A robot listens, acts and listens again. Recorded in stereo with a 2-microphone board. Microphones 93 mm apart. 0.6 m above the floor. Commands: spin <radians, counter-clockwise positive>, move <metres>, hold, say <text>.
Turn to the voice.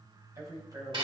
spin -0.70
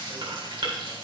hold
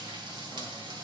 hold
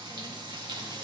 say I heard a man speaking, but can't make it out now. It was about straight ahead or 100° right.